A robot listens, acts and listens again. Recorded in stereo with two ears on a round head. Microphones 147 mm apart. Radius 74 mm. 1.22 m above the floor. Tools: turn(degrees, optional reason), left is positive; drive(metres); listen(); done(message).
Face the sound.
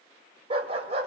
turn(degrees=-40, reason="The dog barking: about 40° right or 140° right.")
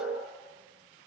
listen()
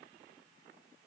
listen()
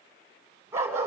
turn(degrees=-15, reason="So it is at 15° right.")
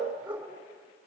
turn(degrees=-10, reason="The dog barking is now 10° right.")
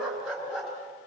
done("Facing the dog barking.")